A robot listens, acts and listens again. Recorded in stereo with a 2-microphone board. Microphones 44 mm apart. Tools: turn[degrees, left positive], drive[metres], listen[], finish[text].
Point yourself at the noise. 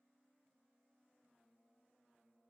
Action: listen[]
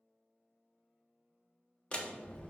Thought: The door slam: about 30° left or 150° left.
Action: turn[30]
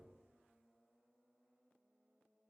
Action: listen[]
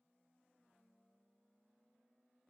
Action: finish[I heard a door slam, but can't make it out now. It was about straight ahead or 120° left.]